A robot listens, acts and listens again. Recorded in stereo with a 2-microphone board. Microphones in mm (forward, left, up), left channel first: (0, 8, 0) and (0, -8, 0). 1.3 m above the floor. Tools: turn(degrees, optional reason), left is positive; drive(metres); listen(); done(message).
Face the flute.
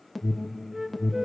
turn(degrees=-30, reason="The flute: about 30° right or 150° right.")
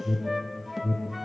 listen()
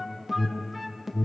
turn(degrees=-10, reason="So it is at 10° right.")
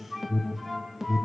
done("Facing the flute, 1 to 2 m away.")